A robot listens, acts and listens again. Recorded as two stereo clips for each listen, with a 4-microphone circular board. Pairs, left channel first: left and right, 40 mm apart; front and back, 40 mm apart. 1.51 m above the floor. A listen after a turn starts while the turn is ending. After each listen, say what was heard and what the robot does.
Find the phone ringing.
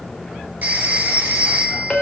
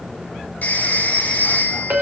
The phone ringing: 45° right. Turn 45° right.
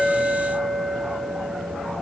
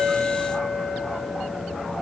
Keep listening.
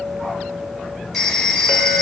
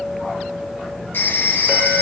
Facing the phone ringing.